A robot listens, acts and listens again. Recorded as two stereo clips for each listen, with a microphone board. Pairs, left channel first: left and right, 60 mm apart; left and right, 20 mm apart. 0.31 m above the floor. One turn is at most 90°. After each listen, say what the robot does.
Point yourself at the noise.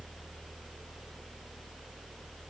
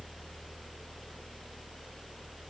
Keep listening.
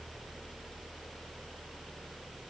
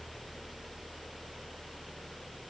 Keep listening.
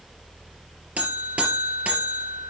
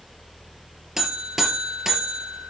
Turn 25° right.
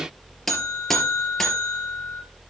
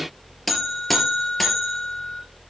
Found it: a buzzer, straight ahead.